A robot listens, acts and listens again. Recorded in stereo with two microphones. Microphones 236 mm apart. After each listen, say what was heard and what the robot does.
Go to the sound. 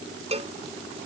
The cowbell: about 25° right or 155° right. Turn 25° right.
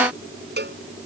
So it is at 130° right. Turn 130° right.
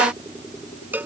The cowbell is now 10° right. Turn 10° right.
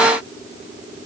Keep listening.
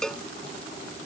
Drive 1.0 m forward.
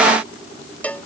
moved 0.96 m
Drive 1.0 m forward.
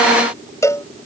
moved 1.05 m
The cowbell is now 15° left. Turn 15° left.
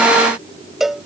Drive 1.0 m forward.
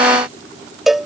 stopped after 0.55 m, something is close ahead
I am next to the cowbell.